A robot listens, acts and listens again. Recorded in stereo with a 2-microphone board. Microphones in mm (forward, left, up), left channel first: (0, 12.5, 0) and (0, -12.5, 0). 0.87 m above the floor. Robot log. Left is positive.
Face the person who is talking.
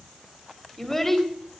note: The child speaking: about 15° left or 165° left.
cmd yaw +15
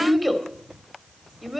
end: Facing the child speaking.